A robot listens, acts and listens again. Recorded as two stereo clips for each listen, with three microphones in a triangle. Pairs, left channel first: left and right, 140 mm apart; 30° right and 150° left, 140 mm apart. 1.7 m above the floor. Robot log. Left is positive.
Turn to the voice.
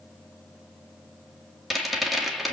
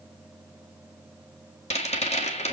cmd idle
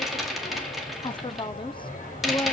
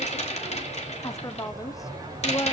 note: The woman speaking: 35° left.
cmd yaw +35
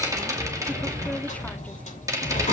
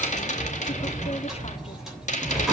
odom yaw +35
cmd idle
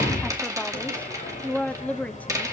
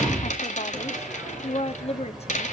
note: The woman speaking is now 10° left.
cmd yaw +10
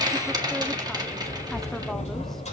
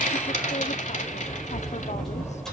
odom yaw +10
cmd idle
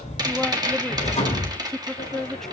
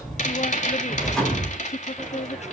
end: Facing the woman speaking.